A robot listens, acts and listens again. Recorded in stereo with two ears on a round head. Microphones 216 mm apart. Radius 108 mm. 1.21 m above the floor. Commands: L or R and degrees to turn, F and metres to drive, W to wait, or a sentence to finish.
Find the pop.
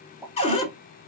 R30
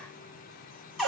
W
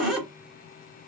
I heard a pop, but can't make it out now. It was about 25° left or 145° right.